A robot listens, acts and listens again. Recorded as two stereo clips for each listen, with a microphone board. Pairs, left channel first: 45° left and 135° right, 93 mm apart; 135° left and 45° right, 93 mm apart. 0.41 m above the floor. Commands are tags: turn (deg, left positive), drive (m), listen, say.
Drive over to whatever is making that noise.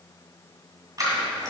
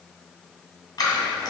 <turn deg="180"/>
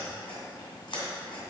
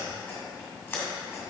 <turn deg="70"/>
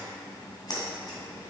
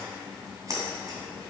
<drive m="1.0"/>
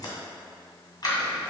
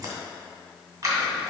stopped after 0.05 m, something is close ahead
<say>Blocked. The scissors is further on, straight ahead.</say>